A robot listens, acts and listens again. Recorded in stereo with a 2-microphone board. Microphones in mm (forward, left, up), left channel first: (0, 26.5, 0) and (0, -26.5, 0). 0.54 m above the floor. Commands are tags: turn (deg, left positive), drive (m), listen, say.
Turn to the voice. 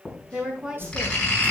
<turn deg="-15"/>
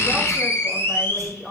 <say>Found it: a woman speaking, straight ahead.</say>